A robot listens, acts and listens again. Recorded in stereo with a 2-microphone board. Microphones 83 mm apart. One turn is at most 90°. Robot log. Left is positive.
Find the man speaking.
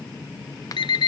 cmd idle
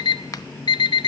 cmd idle
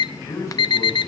note: The man speaking: about 40° left or 140° left.
cmd yaw +40
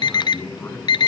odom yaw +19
note: The man speaking: about 20° left or 160° left.
cmd yaw +20
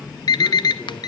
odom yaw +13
cmd idle
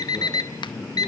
note: So it is at 10° left.
cmd yaw +10
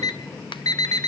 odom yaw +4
cmd idle
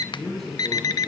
end: Facing the man speaking, over 4 m away.